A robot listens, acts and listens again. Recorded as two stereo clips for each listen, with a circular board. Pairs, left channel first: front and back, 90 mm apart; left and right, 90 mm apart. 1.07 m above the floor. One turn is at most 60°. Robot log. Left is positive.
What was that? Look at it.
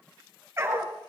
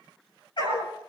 note: The dog barking: 120° left.
cmd yaw +60
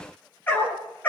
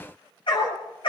note: The dog barking is now 70° left.
cmd yaw +60
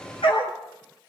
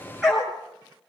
end: Found it: a dog barking, straight ahead, over 4 m away.